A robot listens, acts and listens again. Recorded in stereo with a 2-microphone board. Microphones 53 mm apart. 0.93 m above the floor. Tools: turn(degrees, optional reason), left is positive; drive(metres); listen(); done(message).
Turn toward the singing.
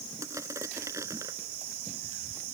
listen()
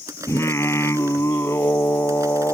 turn(degrees=55, reason="The singing: about 55° left or 125° left.")
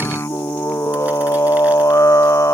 turn(degrees=70, reason="So it is at 70° left.")
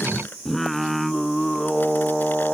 done("Facing the singing.")